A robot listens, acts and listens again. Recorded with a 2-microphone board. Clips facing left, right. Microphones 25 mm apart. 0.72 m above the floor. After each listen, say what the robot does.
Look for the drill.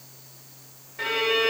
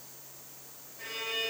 Keep listening.
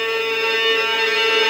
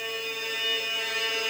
Keep listening.
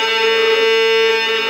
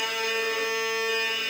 I can't make out a drill, only a violin.